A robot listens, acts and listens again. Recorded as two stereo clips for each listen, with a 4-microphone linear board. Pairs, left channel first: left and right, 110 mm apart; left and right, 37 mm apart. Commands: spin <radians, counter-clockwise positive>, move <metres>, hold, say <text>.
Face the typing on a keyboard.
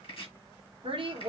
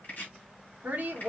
hold
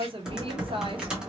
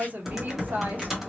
spin -0.52
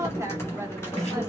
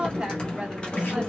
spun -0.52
spin 0.44
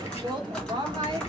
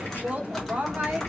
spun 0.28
spin 0.17
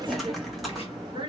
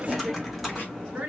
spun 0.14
say Found it: typing on a keyboard, straight ahead, 1 to 2 m away.